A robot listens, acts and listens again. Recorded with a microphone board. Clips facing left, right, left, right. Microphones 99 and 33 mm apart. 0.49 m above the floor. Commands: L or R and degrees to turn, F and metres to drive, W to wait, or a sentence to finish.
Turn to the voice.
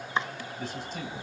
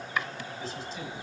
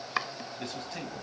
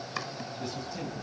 L55
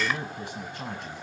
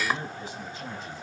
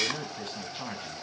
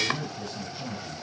L60
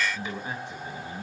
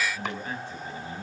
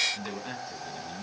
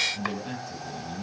L20
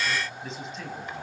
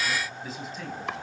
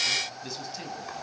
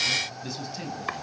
Found it: a man speaking, straight ahead.